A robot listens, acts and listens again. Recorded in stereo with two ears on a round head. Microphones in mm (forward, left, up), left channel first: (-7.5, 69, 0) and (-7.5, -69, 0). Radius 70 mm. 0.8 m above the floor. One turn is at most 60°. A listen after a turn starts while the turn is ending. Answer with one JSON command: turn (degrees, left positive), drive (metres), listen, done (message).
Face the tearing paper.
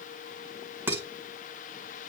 {"listen": true}
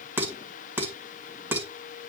{"listen": true}
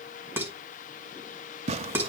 {"turn": -40}
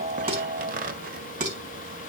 {"turn": -60}
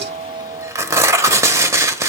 {"turn": -20}
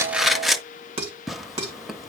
{"done": "Facing the tearing paper, under 1 m away."}